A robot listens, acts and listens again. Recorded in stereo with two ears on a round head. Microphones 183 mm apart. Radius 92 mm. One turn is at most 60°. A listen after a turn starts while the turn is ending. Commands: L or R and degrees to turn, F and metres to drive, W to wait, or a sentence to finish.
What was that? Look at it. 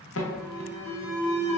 L60
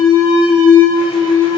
L25
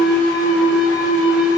Found it: an alarm, straight ahead.